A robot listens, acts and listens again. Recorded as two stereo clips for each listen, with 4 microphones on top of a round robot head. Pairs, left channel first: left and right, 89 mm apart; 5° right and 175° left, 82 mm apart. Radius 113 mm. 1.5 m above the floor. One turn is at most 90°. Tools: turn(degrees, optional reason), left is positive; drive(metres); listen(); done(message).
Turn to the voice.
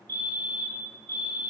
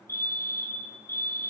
listen()
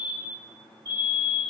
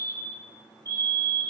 listen()
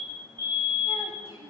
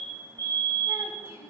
turn(degrees=-20, reason="The child speaking: 20° right.")
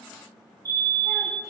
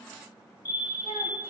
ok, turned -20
listen()
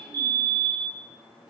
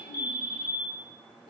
done("Facing the child speaking.")